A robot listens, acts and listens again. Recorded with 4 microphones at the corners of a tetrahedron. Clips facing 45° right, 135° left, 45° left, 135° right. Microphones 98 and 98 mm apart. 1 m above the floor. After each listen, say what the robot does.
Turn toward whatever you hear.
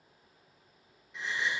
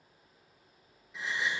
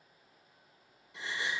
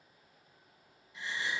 Turn 45° left.
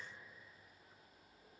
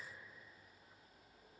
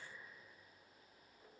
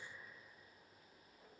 Facing where the gasp came from. I can't hear it now.